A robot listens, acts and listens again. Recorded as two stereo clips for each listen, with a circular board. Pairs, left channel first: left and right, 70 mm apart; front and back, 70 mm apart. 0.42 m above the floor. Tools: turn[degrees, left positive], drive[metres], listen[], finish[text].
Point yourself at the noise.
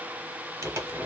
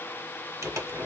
Thought: The crumpling: 135° right.
Action: turn[-135]
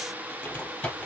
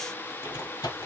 Thought: The crumpling is now 20° left.
Action: turn[20]
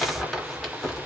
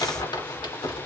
Action: finish[Found it: crumpling, straight ahead, 1 to 2 m away.]